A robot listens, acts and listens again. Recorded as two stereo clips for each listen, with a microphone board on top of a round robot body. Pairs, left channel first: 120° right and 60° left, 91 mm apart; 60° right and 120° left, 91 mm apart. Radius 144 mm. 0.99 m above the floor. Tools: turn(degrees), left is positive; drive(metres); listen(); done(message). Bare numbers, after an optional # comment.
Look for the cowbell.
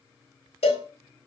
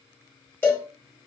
# The cowbell: 130° right.
turn(-130)
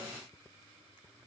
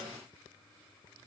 done("Found it: a cowbell, straight ahead.")